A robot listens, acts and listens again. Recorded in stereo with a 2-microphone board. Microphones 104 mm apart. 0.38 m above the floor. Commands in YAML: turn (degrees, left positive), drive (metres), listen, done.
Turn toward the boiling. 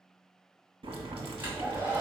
turn: -70
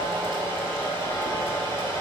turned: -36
listen: true
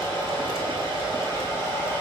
listen: true
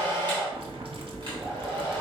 turn: -75
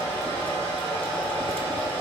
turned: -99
turn: 25
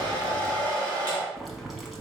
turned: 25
done: "Found it: boiling, straight ahead, under 1 m away."